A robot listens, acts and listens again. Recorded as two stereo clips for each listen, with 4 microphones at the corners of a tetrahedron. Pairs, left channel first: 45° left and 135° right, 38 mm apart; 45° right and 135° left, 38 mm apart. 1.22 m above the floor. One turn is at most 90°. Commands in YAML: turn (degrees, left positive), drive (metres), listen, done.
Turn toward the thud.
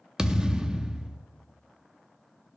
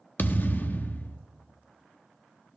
turn: -65
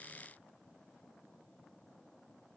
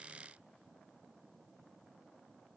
done: "Facing where the thud came from. I can't hear it now."